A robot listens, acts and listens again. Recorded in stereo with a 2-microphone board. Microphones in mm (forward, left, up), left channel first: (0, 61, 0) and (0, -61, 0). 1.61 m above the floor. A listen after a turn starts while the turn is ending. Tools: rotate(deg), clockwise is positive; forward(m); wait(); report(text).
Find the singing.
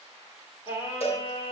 rotate(-40)
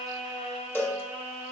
rotate(-100)
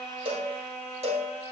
rotate(-20)
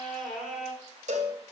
report("Facing the singing, 2 to 4 m away.")